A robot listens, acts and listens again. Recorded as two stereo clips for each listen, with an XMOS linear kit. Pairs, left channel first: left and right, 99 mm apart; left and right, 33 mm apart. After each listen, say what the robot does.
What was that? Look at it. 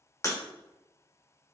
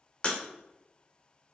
Turn 35° left.
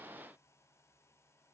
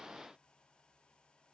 Keep listening.
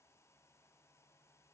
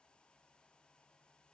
I heard breaking glass, but can't make it out now. It was about straight ahead or 110° left.